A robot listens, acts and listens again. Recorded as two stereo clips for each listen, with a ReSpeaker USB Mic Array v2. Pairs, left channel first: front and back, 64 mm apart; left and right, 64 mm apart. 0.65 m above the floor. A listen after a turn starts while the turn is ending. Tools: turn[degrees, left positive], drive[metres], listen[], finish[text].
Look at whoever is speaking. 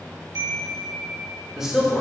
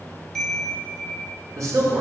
Thought: The man speaking: 100° right.
Action: turn[-100]
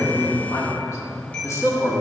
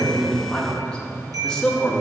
Action: finish[Found it: a man speaking, straight ahead, 1 to 2 m away.]